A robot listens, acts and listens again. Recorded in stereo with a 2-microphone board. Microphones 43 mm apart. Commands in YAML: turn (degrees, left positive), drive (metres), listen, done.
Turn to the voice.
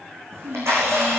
turn: -60
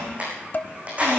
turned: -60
listen: true
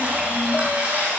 listen: true
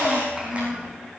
turn: -15
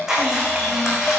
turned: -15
listen: true
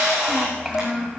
done: "Found it: a child speaking, straight ahead, 1 to 2 m away."